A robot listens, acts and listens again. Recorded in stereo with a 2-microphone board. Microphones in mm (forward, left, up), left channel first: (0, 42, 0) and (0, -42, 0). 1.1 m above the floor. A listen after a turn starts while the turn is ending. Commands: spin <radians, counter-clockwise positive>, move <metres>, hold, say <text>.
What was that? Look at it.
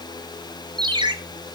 spin -1.13
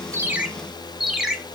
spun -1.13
say Facing the ringtone, 1 to 2 m away.